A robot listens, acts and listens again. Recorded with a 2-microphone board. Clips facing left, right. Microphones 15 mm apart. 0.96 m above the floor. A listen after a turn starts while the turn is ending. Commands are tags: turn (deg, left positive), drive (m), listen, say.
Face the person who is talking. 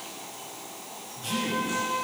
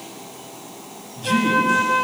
<turn deg="-25"/>
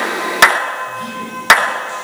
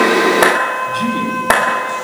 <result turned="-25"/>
<turn deg="-125"/>
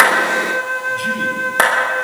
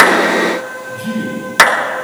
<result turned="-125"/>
<turn deg="25"/>
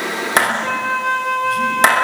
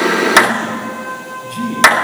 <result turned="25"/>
<listen/>
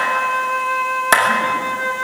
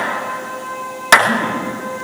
<listen/>
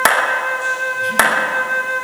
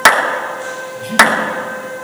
<say>Facing where the man speaking came from. I can't hear it now.</say>